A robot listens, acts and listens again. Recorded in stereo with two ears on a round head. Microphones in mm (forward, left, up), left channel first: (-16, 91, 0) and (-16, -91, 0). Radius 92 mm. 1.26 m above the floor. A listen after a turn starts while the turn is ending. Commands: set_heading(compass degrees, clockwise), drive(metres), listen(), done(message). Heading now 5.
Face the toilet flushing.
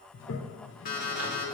set_heading(300)
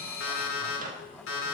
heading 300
listen()
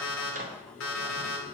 set_heading(260)
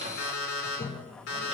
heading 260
set_heading(230)
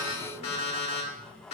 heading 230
done("Facing the toilet flushing.")